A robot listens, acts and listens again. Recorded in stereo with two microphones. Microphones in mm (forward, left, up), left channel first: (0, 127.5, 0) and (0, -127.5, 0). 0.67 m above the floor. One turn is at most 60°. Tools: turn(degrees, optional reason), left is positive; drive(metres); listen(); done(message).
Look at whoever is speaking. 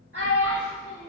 turn(degrees=-55, reason="The child speaking: about 55° right or 125° right.")
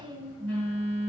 listen()
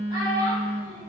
turn(degrees=-15, reason="So it is at 15° right.")
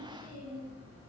listen()
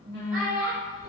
done("Found it: a child speaking, straight ahead, 1 to 2 m away.")